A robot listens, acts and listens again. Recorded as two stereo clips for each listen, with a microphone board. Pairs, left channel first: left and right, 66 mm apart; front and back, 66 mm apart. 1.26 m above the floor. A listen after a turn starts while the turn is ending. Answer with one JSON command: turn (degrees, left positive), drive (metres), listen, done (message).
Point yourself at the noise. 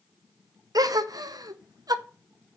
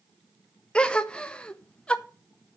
{"turn": -75}
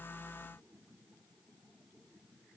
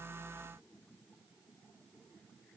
{"done": "I heard a gasp from this way, but can't make it out now."}